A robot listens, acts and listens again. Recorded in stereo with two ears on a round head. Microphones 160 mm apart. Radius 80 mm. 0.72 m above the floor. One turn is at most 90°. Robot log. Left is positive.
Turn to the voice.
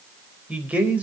cmd yaw -30
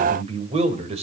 note: So it is at 140° right.
cmd yaw -90
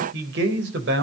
note: The man speaking is now 70° right.
cmd yaw -70
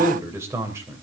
note: The man speaking is now 15° right.
cmd yaw -15
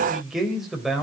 end: Facing the man speaking.